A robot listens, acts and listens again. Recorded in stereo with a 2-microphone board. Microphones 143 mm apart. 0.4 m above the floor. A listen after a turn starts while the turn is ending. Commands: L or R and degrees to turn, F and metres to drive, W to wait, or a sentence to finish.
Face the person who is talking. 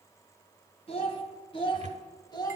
L25
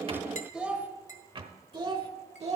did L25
R50
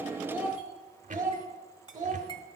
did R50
R35
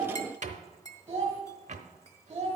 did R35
R25
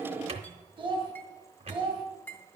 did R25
R15
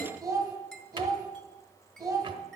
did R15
Facing the child speaking.